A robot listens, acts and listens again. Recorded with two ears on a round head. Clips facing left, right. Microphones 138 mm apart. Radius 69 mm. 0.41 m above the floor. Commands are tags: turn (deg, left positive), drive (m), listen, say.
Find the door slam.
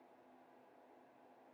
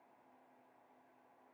<listen/>
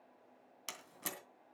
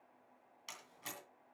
<turn deg="60"/>
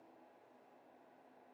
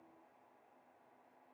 <listen/>
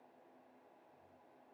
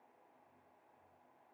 <say>I heard a door slam, but can't make it out now. It was about straight ahead or 60° left.</say>